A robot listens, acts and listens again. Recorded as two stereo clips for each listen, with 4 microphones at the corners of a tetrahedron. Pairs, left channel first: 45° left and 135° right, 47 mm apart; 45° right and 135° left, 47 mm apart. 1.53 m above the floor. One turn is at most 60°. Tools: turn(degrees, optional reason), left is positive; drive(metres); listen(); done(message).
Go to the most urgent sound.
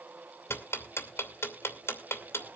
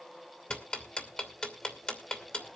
listen()
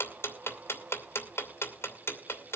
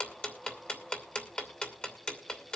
listen()
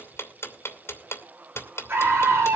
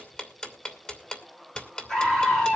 turn(degrees=-60, reason="The scream: 115° right.")
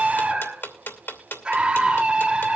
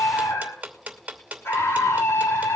turn(degrees=-60, reason="The scream is now 60° right.")
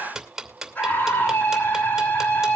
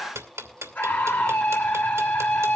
drive(metres=1.0)
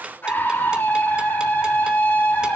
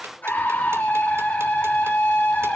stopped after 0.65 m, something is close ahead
done("Blocked. The scream is further on, straight ahead.")